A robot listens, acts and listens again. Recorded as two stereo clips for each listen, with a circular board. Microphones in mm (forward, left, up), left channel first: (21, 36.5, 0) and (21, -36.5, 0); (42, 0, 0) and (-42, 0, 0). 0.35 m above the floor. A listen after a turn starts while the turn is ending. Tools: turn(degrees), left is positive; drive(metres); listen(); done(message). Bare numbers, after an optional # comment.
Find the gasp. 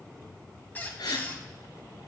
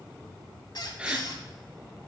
# The gasp: 105° left.
turn(105)
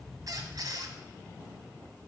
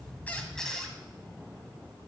done("I heard a gasp from this way, but can't make it out now.")